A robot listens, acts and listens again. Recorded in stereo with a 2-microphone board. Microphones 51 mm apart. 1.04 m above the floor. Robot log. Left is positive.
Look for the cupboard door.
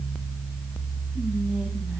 cmd idle
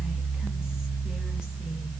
cmd idle
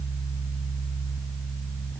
end: I can't make out a cupboard door to turn to.